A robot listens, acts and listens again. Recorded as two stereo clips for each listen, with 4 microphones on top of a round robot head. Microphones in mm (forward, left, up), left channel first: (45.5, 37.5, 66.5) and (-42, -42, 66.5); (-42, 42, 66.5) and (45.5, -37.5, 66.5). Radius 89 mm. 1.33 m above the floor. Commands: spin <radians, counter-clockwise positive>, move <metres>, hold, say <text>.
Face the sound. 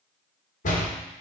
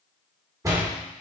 spin 0.44
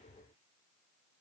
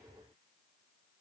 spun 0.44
say I heard a door slam from this way, but can't make it out now.